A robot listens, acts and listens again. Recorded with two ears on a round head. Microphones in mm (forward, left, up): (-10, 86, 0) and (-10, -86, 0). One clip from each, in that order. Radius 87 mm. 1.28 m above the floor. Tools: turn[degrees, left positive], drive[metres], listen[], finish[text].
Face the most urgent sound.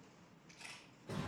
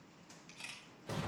Action: listen[]
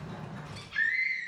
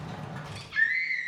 Action: turn[-30]
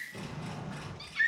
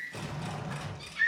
Thought: So it is at 20° left.
Action: turn[20]
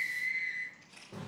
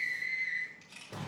Thought: The scream is now 10° left.
Action: turn[10]
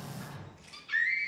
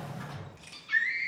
Action: finish[Found it: a scream, straight ahead.]